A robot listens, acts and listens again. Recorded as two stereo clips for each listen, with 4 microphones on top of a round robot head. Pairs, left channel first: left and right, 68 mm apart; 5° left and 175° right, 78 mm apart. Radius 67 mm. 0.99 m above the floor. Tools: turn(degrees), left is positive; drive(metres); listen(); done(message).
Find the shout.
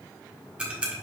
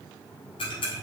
listen()
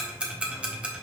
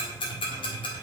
listen()
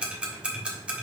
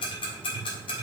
done("I can't make out a shout to turn to.")